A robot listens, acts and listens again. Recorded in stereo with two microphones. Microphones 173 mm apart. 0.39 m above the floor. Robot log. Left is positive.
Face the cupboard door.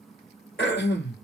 cmd idle
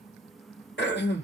cmd idle
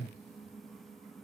end: I can't make out a cupboard door to turn to.